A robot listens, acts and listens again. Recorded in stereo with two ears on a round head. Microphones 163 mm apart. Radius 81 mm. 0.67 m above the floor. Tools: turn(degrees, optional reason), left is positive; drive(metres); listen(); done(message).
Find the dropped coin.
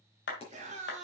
turn(degrees=35, reason="The dropped coin: about 35° left or 145° left.")
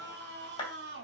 listen()
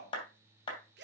done("I heard a dropped coin, but can't make it out now. It was about straight ahead or 110° left.")